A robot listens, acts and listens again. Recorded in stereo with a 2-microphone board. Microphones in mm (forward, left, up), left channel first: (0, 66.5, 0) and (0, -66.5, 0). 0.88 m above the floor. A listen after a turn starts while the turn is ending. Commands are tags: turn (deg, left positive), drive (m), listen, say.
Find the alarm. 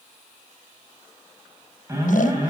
<turn deg="-20"/>
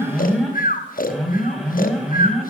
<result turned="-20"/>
<say>Found it: an alarm, straight ahead.</say>